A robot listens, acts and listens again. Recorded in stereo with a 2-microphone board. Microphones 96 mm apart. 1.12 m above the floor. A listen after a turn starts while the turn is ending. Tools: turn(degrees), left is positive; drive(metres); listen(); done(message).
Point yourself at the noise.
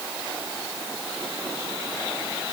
listen()
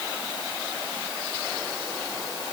listen()
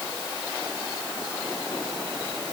done("I can't make out anything.")